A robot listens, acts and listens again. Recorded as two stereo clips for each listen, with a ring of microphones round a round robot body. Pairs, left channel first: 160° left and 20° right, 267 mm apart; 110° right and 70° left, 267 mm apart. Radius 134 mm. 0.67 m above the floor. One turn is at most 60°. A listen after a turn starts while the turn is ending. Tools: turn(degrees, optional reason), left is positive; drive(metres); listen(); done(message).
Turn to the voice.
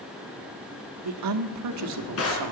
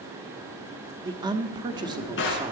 done("Found it: a woman speaking, straight ahead, 1 to 2 m away.")